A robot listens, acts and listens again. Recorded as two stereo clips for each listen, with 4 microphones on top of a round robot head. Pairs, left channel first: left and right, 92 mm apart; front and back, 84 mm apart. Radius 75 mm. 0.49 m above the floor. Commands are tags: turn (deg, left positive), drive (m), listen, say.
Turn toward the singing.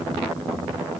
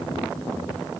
<listen/>
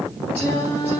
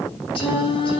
<turn deg="15"/>
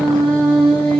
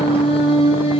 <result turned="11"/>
<turn deg="10"/>
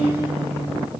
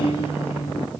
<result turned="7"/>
<say>Found it: singing, straight ahead, 2 to 4 m away.</say>